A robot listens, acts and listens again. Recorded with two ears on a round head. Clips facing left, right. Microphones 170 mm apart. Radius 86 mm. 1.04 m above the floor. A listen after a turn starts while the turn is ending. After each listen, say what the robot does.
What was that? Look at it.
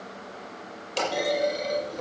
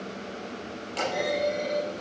Turn 50° left.
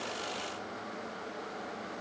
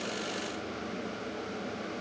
Keep listening.
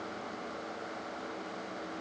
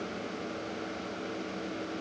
I heard a clunk, but can't make it out now. It was about straight ahead or 80° left.